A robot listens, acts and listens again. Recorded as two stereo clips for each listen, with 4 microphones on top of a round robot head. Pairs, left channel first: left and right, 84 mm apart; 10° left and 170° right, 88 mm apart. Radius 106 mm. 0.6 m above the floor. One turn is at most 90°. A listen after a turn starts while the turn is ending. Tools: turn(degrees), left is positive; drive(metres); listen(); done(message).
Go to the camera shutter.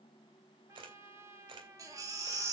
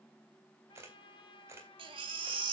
turn(degrees=-90)
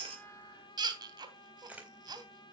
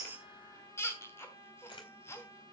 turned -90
turn(degrees=-20)
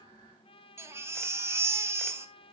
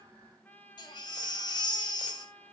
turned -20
listen()
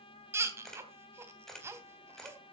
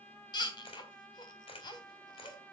drive(metres=1.0)
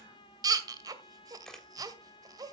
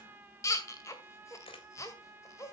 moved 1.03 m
drive(metres=1.0)
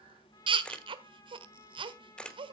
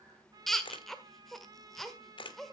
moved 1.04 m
turn(degrees=10)
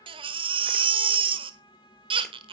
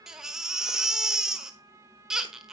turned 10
listen()
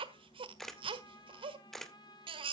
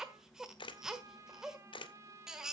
drive(metres=1.0)
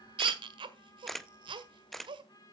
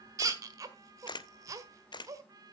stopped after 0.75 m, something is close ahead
done("I am next to the camera shutter.")